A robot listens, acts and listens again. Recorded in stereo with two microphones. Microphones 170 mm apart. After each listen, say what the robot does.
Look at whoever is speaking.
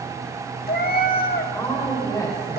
Turn 25° left.
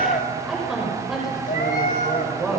Facing the woman speaking, over 4 m away.